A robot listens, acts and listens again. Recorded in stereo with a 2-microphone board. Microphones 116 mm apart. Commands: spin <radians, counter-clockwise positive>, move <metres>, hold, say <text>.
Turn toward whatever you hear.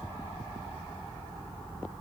hold
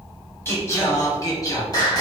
spin 0.61
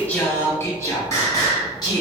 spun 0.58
spin 0.61
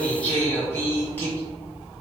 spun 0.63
spin 0.26
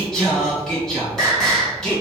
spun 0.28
say Facing the singing.